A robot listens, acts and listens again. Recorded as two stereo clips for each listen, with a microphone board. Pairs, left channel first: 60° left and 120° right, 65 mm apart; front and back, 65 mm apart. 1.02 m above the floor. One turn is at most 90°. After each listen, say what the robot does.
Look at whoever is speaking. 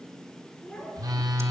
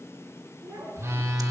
Turn 90° left.
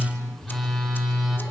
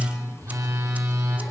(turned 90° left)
Turn 50° left.
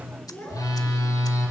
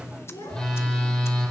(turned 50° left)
Found it: a child speaking, straight ahead, over 4 m away.